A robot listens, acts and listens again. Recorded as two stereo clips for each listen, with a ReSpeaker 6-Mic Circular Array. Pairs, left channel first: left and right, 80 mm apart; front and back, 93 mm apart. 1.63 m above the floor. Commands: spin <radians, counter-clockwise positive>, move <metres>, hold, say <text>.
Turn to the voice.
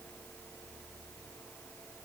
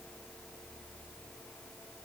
hold
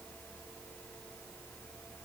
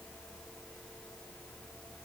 hold
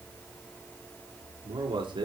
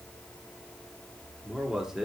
spin -1.66
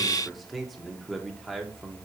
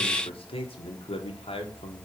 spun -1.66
say Facing the man speaking.